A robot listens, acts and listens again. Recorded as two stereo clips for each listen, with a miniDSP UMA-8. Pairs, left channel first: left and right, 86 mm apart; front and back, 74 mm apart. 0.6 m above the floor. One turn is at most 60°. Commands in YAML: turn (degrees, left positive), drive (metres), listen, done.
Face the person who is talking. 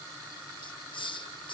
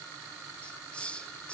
listen: true
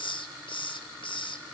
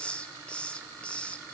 listen: true
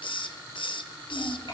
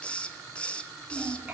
turn: 60
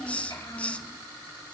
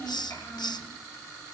turn: 50
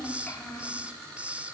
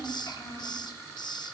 turn: 20
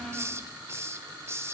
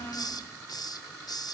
done: "Found it: a child speaking, straight ahead, over 4 m away."